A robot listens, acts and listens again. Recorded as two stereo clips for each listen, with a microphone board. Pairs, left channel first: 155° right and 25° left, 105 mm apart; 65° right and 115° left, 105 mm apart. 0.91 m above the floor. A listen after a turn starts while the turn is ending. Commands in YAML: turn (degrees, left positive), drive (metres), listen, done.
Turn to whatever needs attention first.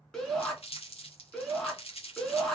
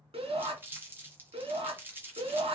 turn: 125
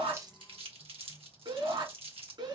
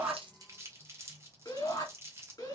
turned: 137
turn: -10
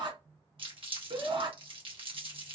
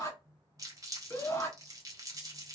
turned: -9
done: "Facing the shout."